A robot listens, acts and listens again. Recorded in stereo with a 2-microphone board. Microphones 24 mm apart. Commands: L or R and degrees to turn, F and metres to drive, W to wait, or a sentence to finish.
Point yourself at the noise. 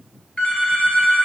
L60
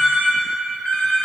L60
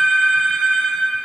L20
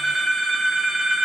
Found it: a phone ringing, straight ahead.